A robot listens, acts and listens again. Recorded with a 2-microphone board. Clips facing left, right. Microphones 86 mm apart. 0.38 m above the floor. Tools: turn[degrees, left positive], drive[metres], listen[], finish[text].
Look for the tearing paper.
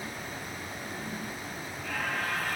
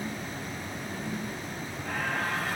Action: listen[]
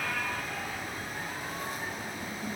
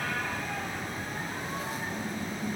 Action: listen[]
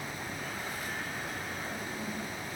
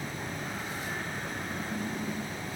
Action: finish[I can't make out tearing paper to turn to.]